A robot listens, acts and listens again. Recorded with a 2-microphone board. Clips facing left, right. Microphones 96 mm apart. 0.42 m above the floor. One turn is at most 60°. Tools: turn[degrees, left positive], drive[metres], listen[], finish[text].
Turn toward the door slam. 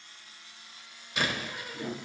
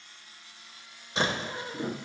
Thought: The door slam: about 30° right or 150° right.
Action: turn[-30]
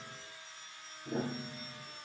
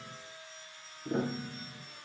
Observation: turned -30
Action: listen[]
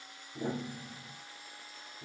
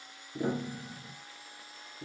Action: finish[I heard a door slam, but can't make it out now. It was about straight ahead or 120° right.]